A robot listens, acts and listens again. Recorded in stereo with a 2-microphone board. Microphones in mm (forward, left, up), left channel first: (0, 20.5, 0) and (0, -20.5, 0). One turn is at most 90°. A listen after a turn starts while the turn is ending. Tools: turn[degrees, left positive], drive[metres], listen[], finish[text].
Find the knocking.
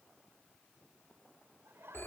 Action: listen[]
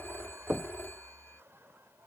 Thought: The knocking: about 40° right or 140° right.
Action: turn[-40]
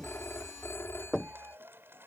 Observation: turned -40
Action: finish[Found it: knocking, straight ahead.]